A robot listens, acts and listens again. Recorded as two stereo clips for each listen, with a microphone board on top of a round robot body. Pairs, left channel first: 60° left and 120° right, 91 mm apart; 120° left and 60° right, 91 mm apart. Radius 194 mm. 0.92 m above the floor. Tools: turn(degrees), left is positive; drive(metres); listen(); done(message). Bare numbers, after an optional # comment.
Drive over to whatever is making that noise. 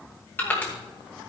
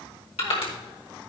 # The crushing: 130° left.
turn(130)
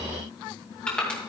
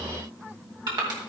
# The crushing is now 20° right.
turn(-20)
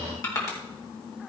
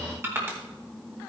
drive(1.0)
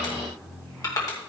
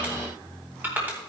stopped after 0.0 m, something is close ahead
# The crushing is now 10° left.
turn(10)
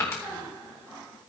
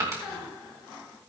done("Something is in my way. I am facing the crushing but have not reached it.")